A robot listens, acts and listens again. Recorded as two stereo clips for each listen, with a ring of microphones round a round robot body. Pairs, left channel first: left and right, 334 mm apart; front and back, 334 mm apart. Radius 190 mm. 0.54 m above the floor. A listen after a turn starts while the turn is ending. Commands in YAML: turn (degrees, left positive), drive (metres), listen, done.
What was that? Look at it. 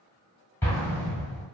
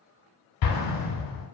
turn: 10
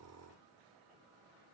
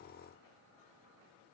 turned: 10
done: "I heard an explosion from this way, but can't make it out now."